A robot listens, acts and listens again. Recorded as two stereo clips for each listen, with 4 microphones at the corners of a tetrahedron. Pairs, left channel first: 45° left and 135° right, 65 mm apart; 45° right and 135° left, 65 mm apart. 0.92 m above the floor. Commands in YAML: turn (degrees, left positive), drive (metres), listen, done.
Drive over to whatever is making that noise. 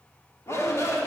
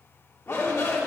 drive: 1.0
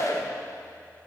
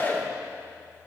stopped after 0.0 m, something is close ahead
turn: 10
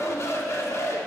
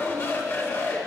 done: "Blocked. The shout is further on, straight ahead."